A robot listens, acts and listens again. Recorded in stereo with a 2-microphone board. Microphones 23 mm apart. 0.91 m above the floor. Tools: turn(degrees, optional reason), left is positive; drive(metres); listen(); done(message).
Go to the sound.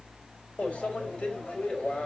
turn(degrees=70, reason="The microwave: about 70° left or 110° left.")
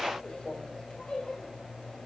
turn(degrees=40, reason="So it is at 40° left.")
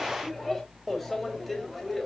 drive(metres=1.0)
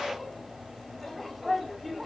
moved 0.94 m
drive(metres=1.0)
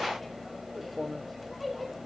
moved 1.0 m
drive(metres=1.0)
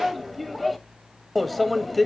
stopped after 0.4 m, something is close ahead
done("I am next to the microwave.")